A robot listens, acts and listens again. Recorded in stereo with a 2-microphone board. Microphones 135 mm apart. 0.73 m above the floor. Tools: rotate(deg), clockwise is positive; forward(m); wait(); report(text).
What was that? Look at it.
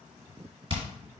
rotate(40)
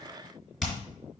report("Found it: hammering, straight ahead.")